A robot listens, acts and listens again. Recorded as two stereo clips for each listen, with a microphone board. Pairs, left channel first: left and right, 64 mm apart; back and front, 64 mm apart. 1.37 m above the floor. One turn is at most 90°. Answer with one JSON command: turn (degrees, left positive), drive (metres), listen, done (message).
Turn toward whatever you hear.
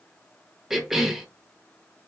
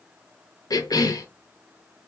{"turn": -90}
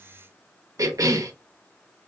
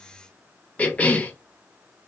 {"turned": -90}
{"turn": -90}
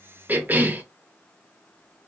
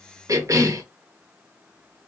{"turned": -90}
{"turn": -30}
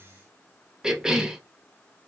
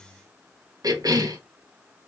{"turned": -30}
{"turn": -10}
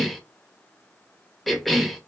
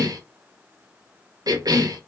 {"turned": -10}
{"done": "Found it: a cough, straight ahead."}